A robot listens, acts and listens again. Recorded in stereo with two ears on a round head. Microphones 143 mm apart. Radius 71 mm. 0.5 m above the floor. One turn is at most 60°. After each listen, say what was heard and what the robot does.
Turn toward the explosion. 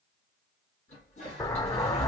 The explosion: about 20° left or 160° left. Turn 20° left.
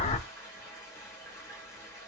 So it is at 135° left. Turn 60° left.
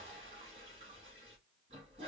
Nothing new. It was at 75° left. Turn 60° left.
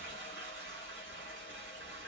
Nothing new. It was at 15° left. Turn 15° left.
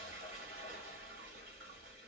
Facing where the explosion came from. I can't hear it now.